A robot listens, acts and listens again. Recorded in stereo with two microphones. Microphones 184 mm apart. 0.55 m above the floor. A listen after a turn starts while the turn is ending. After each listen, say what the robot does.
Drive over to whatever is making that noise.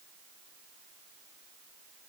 Keep listening.
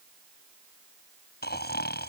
Turn 65° left.
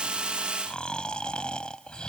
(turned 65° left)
Drive 1.0 m forward.
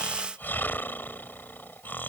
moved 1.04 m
Turn 10° left.
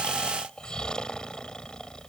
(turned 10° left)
Drive 1.0 m forward.
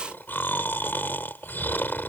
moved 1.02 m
Turn 10° left.
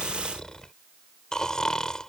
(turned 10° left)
Drive 1.0 m forward.
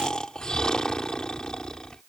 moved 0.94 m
Drive 1.0 m forward.
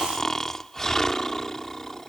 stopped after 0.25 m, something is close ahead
Arrived at the snoring, straight ahead.